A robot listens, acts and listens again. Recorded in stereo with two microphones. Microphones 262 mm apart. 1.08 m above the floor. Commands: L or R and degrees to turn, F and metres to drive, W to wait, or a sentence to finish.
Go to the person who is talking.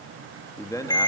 L30
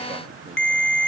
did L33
W
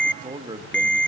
R20
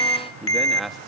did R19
F1.0
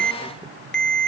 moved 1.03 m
W
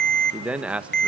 F1.0
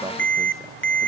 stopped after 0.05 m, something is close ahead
W
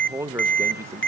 R10
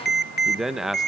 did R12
Arrived at the man speaking, straight ahead.